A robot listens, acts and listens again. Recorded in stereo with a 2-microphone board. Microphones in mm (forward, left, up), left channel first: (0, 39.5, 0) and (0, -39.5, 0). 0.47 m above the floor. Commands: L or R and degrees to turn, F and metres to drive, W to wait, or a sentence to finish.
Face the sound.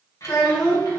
L55
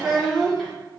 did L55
L10
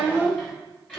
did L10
L10
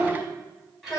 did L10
Facing the child speaking.